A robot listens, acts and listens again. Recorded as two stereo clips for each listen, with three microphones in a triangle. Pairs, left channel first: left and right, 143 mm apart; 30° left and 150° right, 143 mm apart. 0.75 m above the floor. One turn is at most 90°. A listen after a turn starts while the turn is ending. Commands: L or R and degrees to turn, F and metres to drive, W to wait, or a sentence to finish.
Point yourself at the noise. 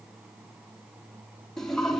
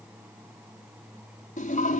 Found it: a toilet flushing, straight ahead.